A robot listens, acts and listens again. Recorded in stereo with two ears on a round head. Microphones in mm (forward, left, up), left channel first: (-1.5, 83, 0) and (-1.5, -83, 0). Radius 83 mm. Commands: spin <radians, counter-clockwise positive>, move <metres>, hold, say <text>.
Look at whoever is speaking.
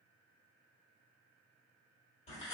hold
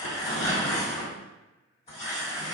hold
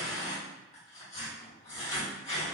say I can't make out anyone speaking to turn to.